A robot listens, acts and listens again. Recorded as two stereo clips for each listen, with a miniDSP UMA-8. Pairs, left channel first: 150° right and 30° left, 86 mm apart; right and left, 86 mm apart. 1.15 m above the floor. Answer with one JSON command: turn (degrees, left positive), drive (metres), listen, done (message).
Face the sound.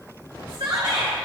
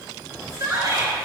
{"turn": 50}
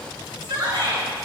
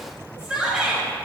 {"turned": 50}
{"turn": 10}
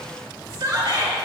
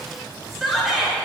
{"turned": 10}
{"done": "Found it: a shout, straight ahead."}